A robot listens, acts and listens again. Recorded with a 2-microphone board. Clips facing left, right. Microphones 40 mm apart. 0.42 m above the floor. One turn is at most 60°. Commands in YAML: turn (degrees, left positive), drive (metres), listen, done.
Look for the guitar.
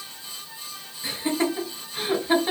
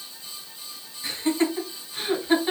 listen: true
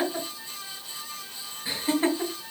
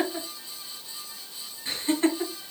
listen: true
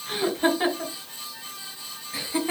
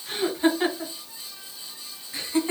done: "I can't make out a guitar to turn to."